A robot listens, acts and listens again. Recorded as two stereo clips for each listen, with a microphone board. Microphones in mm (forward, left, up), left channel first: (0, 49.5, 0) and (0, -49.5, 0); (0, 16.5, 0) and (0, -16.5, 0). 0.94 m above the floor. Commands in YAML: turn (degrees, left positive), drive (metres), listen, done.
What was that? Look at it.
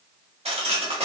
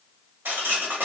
turn: -90
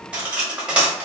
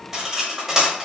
turn: -10
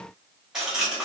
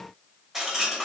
done: "Found it: cutlery clinking, straight ahead, 1 to 2 m away."